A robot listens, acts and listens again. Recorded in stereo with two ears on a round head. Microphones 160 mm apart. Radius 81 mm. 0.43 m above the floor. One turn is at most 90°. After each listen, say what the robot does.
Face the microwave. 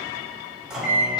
Turn 30° right.
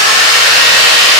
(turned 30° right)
Keep listening.
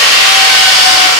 Keep listening.
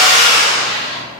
I heard a microwave, but can't make it out now. It was about 25° left or 145° right.